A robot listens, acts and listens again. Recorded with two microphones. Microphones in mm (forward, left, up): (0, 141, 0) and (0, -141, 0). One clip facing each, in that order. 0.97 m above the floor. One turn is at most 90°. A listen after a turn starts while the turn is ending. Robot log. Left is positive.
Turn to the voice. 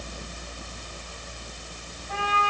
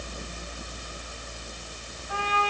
cmd idle
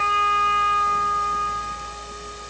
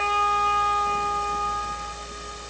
cmd idle
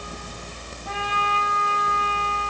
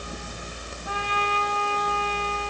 end: I can't make out anyone speaking, only a trumpet.